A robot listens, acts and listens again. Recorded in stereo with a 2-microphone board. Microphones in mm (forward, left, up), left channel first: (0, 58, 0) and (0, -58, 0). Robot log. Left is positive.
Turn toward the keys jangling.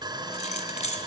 note: The keys jangling: about 70° left or 110° left.
cmd yaw +70
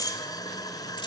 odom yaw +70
note: So it is at 35° left.
cmd yaw +35
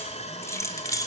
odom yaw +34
note: The keys jangling is now 30° left.
cmd yaw +30
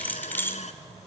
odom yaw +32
note: The keys jangling is now 20° left.
cmd yaw +20
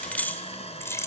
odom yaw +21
note: The keys jangling is now 25° left.
cmd yaw +25
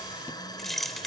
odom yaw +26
end: Facing the keys jangling, 1 to 2 m away.